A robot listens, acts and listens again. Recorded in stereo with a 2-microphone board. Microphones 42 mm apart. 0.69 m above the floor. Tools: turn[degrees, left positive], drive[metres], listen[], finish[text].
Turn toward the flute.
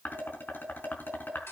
Action: listen[]
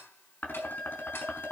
Action: turn[90]
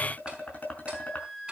Thought: So it is at 10° left.
Action: turn[10]
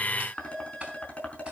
Action: listen[]
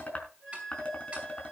Action: finish[Found it: a flute, straight ahead, over 4 m away.]